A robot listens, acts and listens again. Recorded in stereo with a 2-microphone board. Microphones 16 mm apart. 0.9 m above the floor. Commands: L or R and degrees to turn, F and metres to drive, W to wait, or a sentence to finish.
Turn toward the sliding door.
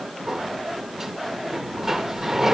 R30
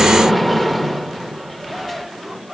Found it: a sliding door, straight ahead, under 1 m away.